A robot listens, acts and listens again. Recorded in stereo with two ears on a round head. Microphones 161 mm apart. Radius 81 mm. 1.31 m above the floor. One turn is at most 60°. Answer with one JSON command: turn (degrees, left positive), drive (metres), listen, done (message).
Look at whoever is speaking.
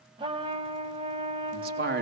{"turn": -55}
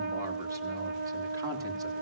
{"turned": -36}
{"listen": true}
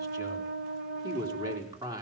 {"turn": -20}
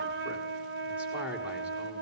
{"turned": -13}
{"turn": -10}
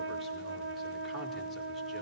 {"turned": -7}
{"listen": true}
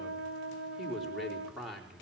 {"done": "Found it: a man speaking, straight ahead."}